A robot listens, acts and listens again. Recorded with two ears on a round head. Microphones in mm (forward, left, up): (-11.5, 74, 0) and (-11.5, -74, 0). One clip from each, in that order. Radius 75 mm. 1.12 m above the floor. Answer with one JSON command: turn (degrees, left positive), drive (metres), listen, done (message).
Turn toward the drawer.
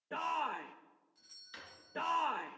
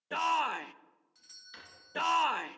{"turn": 30}
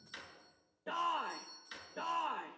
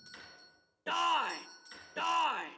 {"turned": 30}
{"turn": 150}
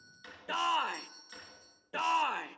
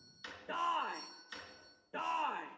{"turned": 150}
{"turn": -20}
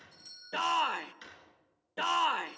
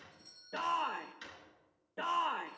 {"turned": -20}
{"done": "Found it: a drawer, straight ahead, over 4 m away."}